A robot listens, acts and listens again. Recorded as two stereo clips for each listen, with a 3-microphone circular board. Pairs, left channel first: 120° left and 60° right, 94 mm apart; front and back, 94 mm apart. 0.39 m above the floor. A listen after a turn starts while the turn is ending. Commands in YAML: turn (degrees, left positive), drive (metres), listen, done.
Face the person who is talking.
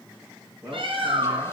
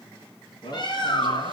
done: "Found it: a man speaking, straight ahead."